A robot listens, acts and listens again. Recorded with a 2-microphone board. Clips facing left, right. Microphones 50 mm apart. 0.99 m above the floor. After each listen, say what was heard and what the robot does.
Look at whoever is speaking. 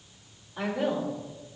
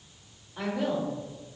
Turn 30° left.
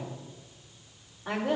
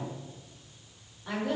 So it is at 150° left. Turn 150° left.
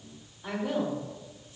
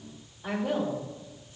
Facing the woman speaking.